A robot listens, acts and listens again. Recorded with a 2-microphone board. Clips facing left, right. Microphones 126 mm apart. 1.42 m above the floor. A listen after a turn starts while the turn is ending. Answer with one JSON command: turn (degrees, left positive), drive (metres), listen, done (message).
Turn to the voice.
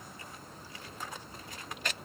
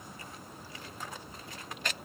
{"listen": true}
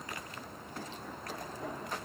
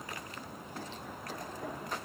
{"listen": true}
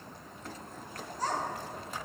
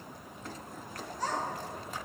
{"turn": 40}
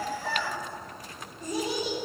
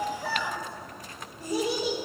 {"done": "Found it: a child speaking, straight ahead."}